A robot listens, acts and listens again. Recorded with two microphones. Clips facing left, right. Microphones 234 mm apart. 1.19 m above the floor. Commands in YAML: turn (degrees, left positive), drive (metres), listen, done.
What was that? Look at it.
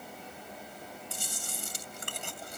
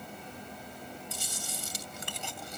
turn: 55
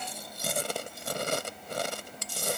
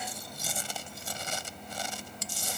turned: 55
turn: 70
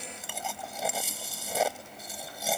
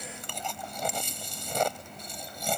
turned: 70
done: "Found it: chewing, straight ahead."